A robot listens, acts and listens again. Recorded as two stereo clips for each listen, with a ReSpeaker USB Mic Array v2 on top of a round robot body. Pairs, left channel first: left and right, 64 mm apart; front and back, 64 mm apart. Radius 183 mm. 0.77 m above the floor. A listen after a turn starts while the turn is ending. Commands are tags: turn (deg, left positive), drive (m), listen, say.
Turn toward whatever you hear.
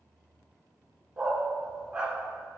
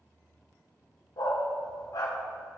<turn deg="-20"/>
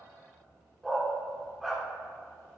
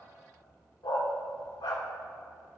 <say>Found it: a dog barking, straight ahead.</say>